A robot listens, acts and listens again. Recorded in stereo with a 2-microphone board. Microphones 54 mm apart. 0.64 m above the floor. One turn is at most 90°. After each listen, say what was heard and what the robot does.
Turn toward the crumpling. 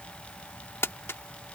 The crumpling: about 50° left or 130° left. Turn 50° left.
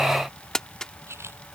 So it is at 10° left. Turn 10° left.
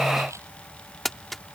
Facing the crumpling.